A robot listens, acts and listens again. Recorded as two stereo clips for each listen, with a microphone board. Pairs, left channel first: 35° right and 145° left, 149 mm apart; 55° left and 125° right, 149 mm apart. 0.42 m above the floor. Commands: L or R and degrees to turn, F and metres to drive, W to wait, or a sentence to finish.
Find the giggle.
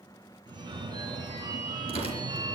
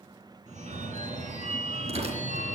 W
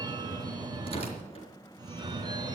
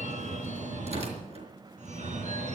W
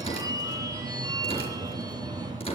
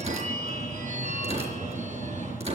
I can't make out a giggle, only tearing paper and a phone ringing.